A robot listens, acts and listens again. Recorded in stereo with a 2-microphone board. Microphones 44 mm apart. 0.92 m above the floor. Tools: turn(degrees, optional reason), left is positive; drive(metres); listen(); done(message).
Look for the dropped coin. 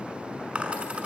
turn(degrees=-30, reason="The dropped coin: about 30° right or 150° right.")
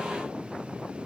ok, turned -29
listen()
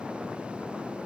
done("I heard a dropped coin, but can't make it out now. It was about straight ahead or 125° right.")